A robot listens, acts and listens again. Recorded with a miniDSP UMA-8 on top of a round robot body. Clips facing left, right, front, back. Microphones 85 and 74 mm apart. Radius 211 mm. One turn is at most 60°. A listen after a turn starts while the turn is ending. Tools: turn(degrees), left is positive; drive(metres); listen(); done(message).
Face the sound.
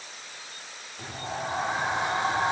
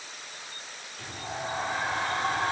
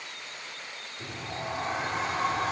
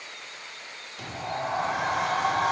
turn(degrees=60)
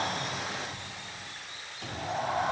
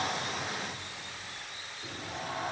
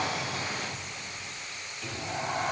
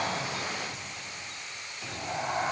turn(degrees=60)
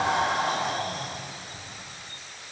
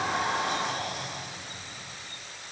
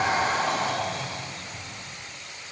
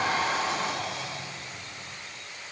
turn(degrees=45)
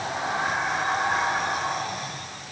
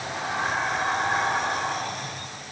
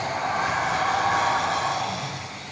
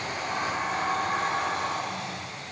done("Facing the sliding door, 1 to 2 m away.")